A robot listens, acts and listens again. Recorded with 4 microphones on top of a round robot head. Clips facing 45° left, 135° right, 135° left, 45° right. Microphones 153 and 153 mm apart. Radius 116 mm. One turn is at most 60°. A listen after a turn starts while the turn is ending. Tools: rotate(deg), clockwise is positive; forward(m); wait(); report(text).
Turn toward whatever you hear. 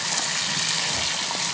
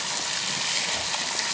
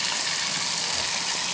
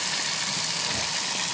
wait()
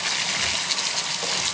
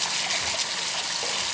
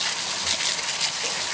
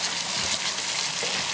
wait()
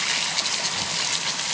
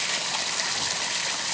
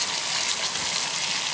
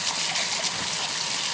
report("I can't make out anything to turn to.")